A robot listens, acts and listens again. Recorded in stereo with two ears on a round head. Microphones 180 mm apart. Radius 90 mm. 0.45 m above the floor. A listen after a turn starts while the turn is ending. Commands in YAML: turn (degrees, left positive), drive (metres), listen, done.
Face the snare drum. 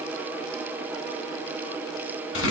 listen: true
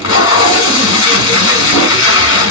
listen: true
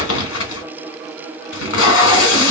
done: "I can't make out a snare drum to turn to."